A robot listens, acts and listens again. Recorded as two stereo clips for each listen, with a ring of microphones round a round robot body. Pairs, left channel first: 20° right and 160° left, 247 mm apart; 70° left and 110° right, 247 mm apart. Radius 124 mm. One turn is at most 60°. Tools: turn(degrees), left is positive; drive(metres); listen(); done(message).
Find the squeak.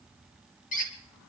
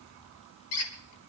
turn(degrees=40)
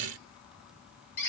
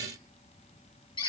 done("Facing the squeak, 2 to 4 m away.")